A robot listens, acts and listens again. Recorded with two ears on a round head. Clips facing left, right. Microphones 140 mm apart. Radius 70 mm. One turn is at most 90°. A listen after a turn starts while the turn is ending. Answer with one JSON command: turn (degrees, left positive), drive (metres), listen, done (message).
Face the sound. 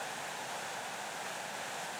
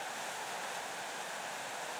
{"listen": true}
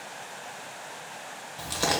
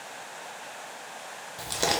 {"turn": -20}
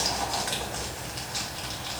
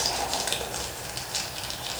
{"turn": -90}
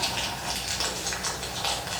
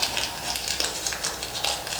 {"turn": -35}
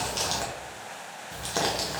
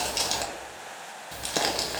{"turn": -15}
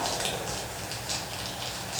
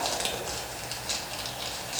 {"done": "Facing the crumpling."}